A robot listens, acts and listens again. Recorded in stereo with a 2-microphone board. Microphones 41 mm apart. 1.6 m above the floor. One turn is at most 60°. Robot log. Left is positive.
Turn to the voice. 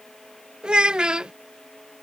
note: The child speaking: about 20° right or 160° right.
cmd yaw -20
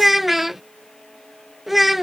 end: Found it: a child speaking, straight ahead.